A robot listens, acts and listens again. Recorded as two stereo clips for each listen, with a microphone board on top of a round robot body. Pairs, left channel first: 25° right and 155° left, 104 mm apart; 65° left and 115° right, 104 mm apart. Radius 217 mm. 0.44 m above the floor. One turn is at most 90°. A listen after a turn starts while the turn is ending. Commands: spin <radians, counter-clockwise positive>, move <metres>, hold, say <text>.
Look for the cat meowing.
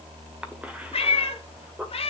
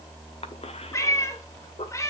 say Found it: a cat meowing, straight ahead.